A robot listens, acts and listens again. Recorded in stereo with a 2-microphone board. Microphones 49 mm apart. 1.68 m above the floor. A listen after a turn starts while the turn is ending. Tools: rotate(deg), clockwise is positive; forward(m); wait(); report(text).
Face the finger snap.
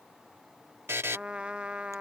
wait()
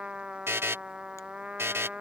wait()
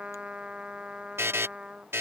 report("I can't make out a finger snap, only a trumpet and a buzzer.")